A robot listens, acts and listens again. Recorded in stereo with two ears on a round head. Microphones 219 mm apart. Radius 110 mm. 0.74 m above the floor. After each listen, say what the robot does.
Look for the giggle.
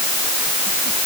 Keep listening.
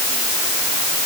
Keep listening.
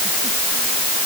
I can't make out a giggle.